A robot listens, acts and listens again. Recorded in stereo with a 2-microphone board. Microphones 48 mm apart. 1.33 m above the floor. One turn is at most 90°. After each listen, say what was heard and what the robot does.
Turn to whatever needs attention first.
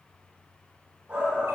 The shout: about 20° right or 160° right. Turn 20° right.
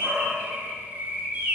So it is at 140° right. Turn 90° right.
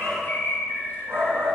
The shout is now 60° right. Turn 60° right.
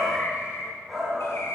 The shout is now 10° right. Turn 10° right.
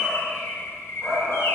Found it: a shout, straight ahead, over 4 m away.